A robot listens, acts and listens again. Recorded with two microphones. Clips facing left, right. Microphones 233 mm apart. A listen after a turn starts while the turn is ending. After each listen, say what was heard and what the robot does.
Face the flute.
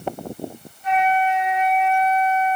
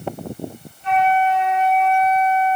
The flute: about 30° right or 150° right. Turn 30° right.
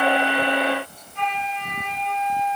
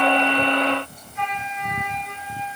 Facing the flute, 2 to 4 m away.